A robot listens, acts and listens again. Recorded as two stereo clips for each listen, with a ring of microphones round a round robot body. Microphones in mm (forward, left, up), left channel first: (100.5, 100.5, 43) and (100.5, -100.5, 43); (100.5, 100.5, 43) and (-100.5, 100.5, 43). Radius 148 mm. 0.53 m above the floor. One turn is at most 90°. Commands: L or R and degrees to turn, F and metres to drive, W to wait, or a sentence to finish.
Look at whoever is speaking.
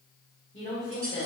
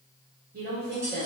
L90
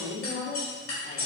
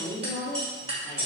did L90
L45
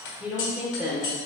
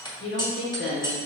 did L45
Facing the woman speaking, 1 to 2 m away.